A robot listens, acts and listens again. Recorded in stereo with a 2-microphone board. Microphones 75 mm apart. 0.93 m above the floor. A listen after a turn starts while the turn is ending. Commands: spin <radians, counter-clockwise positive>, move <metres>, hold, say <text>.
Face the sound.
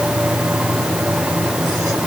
hold
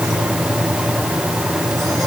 hold
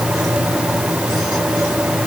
say I can't make out anything to turn to.